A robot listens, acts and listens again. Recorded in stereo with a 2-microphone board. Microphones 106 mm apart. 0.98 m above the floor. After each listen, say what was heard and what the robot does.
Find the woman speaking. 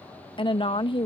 The woman speaking: about 50° left or 130° left. Turn 50° left.
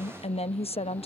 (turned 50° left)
So it is at 80° left. Turn 80° left.
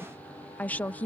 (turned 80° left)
The woman speaking is now 15° left. Turn 15° left.
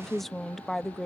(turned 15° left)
Facing the woman speaking.